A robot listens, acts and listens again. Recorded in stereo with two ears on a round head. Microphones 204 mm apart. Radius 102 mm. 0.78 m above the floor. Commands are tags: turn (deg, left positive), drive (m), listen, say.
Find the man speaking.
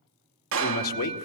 <turn deg="75"/>
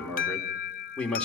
<say>Found it: a man speaking, straight ahead, 2 to 4 m away.</say>